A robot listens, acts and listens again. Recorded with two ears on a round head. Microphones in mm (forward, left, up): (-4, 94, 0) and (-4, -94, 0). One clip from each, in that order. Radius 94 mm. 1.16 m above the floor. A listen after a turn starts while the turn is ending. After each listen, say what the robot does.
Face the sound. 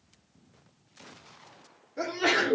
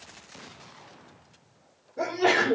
Turn 55° left.
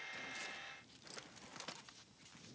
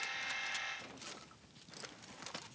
Keep listening.
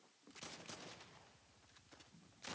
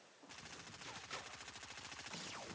I heard a sneeze, but can't make it out now. It was about straight ahead or 70° left.